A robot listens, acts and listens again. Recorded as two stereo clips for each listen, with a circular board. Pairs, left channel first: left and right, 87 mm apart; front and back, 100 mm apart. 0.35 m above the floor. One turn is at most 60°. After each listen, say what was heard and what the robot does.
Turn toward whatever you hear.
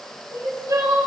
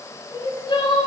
The crying: 40° right. Turn 40° right.
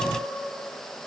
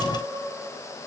Keep listening.
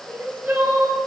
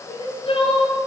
The crying is now 25° right. Turn 25° right.
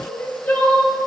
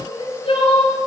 The crying is now 20° left. Turn 20° left.
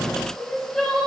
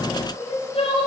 Found it: crying, straight ahead, 2 to 4 m away.